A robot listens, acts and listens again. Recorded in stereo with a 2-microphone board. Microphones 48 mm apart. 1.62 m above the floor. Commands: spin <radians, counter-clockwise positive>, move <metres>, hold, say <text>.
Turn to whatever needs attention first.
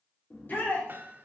spin 0.79
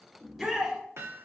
say Found it: a shout, straight ahead.